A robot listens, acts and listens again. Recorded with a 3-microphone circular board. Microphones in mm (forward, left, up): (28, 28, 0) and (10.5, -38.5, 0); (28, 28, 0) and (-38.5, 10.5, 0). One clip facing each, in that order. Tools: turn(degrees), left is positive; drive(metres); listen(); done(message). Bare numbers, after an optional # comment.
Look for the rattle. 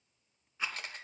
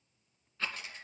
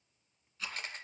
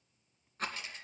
# The rattle: 150° left.
turn(150)
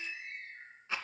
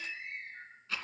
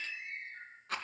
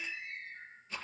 # The rattle is now 10° left.
turn(10)
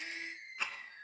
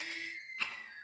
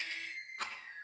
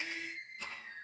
done("Found it: a rattle, straight ahead.")